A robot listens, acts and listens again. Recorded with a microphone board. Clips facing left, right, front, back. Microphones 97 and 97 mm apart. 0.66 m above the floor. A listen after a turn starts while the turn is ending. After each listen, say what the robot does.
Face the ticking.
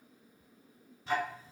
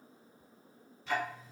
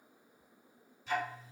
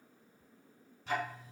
Turn 145° left.
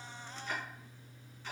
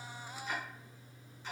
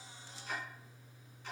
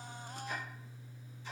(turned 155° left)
Turn 10° right.
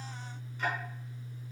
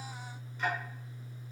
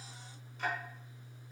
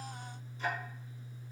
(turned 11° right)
Found it: ticking, straight ahead.